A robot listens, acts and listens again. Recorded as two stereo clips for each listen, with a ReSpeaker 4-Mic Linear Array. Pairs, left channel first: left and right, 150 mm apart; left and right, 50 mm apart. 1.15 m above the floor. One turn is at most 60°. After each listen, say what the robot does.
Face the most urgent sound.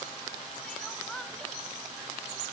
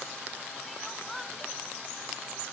Turn 30° left.
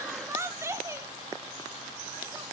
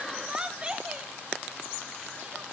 Turn 20° right.
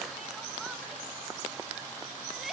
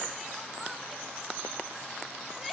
Found it: crying, straight ahead, under 1 m away.